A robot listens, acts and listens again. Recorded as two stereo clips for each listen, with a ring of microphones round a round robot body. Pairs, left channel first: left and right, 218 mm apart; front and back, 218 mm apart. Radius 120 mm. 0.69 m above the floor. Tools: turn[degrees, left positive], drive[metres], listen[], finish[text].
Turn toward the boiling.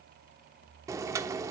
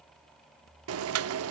Thought: The boiling: 170° right.
Action: turn[-170]
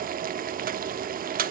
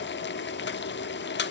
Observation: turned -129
Thought: The boiling is now 40° right.
Action: turn[-40]
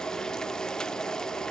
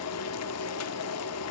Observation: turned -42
Action: finish[Found it: boiling, straight ahead.]